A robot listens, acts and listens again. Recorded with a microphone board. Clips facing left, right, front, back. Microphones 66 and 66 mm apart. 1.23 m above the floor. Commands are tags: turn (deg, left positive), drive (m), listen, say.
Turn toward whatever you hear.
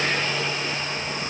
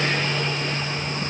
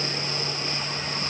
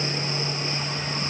<listen/>
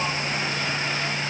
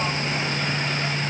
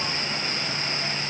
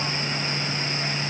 <listen/>
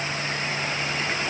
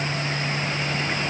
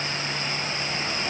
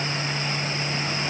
<say>I can't make out anything to turn to.</say>